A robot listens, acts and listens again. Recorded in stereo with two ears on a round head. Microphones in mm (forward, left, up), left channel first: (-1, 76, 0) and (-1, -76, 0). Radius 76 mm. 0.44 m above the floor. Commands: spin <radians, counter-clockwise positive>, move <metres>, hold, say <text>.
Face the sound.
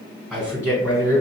spin 0.35
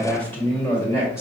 spin 0.35
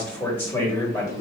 spin 0.35
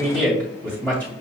spin 0.52
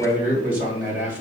say Found it: a man speaking, straight ahead, 2 to 4 m away.